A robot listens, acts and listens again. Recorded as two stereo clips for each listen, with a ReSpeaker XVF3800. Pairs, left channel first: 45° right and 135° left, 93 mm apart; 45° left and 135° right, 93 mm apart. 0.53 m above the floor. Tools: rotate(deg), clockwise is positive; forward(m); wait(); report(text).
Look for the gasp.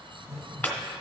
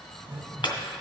wait()
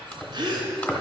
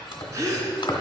rotate(-170)
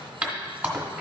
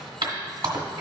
report("Facing where the gasp came from. I can't hear it now.")